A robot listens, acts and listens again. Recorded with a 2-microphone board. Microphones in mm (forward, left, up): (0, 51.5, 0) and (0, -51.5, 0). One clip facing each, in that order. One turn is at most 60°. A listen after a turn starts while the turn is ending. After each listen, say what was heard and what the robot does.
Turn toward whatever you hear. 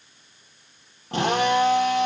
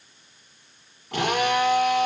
The drill: about 30° left or 150° left. Turn 30° left.
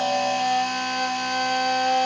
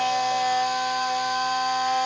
So it is at 120° left. Turn 60° left.
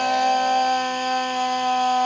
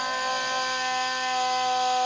The drill is now 55° left. Turn 55° left.
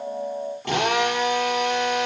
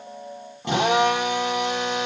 The drill is now 15° right. Turn 15° right.
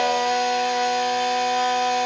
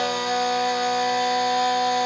The drill is now 10° right. Turn 10° right.
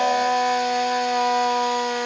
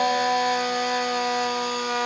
Found it: a drill, straight ahead.